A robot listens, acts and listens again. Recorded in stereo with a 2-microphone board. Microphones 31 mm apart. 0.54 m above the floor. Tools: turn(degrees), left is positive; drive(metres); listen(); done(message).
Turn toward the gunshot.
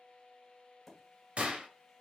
turn(degrees=-45)
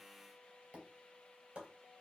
listen()
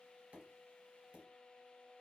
done("I heard a gunshot, but can't make it out now. It was about straight ahead or 90° right.")